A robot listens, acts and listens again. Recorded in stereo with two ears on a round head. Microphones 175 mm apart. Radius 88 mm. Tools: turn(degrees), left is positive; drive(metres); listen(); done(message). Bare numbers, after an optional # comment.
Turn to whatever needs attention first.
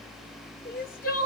# The crying: about 45° left or 135° left.
turn(45)
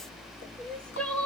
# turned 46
done("Facing the crying, 1 to 2 m away.")